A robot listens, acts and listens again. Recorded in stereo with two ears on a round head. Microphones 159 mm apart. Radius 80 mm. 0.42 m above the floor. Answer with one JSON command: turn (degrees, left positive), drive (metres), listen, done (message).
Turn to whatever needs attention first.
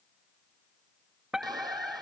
{"turn": -30}
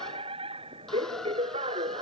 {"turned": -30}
{"turn": -145}
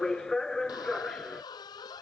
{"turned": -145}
{"done": "Found it: a fire alarm, straight ahead."}